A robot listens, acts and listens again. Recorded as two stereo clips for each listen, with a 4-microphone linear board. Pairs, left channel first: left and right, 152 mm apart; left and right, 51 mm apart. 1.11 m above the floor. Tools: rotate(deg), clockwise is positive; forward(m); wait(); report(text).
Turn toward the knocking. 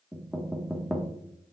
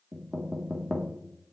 rotate(30)
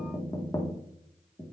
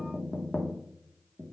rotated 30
rotate(-25)
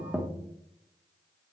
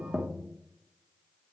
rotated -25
report("Found it: knocking, straight ahead.")